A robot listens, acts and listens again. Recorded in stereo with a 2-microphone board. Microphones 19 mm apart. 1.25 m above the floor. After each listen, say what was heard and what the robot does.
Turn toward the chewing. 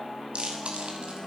Turn 90° right.
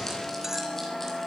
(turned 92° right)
Keep listening.
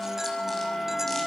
Keep listening.
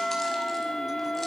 I heard chewing from this way, but can't make it out now.